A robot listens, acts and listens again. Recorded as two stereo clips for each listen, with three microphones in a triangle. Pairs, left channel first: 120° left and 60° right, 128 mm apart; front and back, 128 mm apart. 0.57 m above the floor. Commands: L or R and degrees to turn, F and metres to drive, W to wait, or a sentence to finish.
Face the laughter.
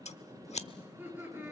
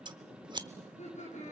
L10
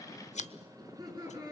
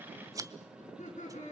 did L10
Found it: laughter, straight ahead, over 4 m away.